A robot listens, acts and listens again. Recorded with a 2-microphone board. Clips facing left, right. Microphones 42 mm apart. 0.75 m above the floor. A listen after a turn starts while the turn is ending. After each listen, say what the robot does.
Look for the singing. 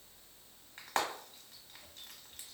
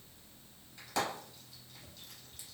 Keep listening.
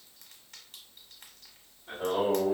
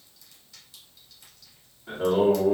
Turn 65° right.
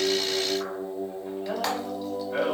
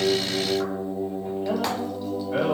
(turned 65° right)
Turn 45° right.
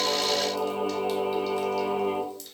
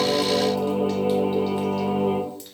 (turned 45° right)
Turn 20° right.
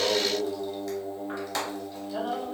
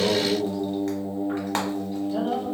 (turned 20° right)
Facing the singing, 1 to 2 m away.